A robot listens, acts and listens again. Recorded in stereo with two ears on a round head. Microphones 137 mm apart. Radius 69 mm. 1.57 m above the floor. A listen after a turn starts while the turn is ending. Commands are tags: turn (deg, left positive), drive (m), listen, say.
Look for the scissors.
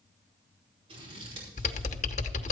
<turn deg="-40"/>
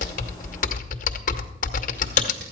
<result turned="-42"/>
<listen/>
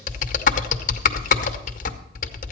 <listen/>
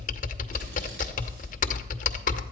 <say>I heard scissors, but can't make it out now. It was about 5° left or 100° right.</say>